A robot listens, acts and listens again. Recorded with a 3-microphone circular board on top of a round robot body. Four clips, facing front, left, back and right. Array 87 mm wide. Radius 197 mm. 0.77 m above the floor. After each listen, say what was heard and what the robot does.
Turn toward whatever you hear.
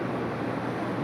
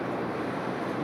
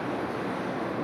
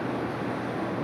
Keep listening.
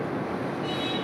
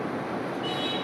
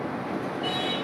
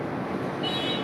The singing: straight behind. Turn 180° left.
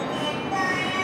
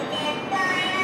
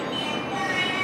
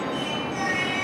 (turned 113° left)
The singing is now 65° left. Turn 65° left.
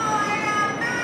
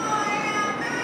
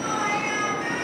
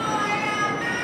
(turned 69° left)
Facing the singing, 1 to 2 m away.